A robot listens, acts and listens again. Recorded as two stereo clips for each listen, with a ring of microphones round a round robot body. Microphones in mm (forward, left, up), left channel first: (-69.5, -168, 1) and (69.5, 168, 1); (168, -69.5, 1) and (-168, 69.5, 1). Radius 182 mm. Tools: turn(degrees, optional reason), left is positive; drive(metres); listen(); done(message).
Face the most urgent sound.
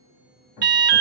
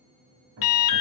done("Facing the alarm, 1 to 2 m away.")